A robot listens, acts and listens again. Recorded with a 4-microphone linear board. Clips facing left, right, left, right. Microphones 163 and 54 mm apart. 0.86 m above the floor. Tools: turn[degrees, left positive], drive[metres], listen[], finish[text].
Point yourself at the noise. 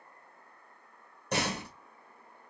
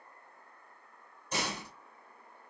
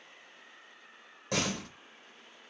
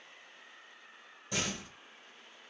Thought: The door slam: about 70° left or 110° left.
Action: turn[70]
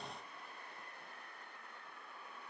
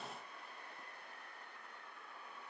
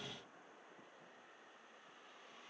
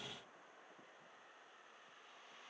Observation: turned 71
Action: listen[]
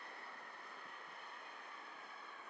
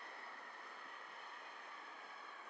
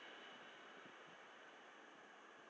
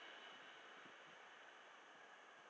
Action: finish[I heard a door slam, but can't make it out now. It was about straight ahead or 35° left.]